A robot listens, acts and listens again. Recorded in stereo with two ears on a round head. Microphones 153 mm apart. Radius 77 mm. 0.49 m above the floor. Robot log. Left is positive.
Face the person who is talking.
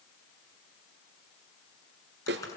cmd idle
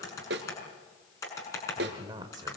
note: The man speaking: about 25° right or 155° right.
cmd yaw -25
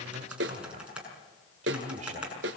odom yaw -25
note: So it is at 125° right.
cmd yaw -125
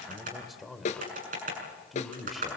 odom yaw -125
end: Found it: a man speaking, straight ahead.